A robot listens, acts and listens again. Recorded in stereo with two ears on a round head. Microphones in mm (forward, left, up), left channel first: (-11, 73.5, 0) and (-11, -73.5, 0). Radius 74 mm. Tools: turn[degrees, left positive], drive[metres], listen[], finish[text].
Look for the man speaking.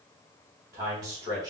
Thought: The man speaking: about 20° right or 160° right.
Action: turn[-20]
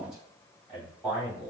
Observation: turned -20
Action: turn[-30]
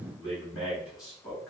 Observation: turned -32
Thought: So it is at 25° left.
Action: turn[25]
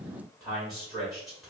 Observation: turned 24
Action: finish[Found it: a man speaking, straight ahead.]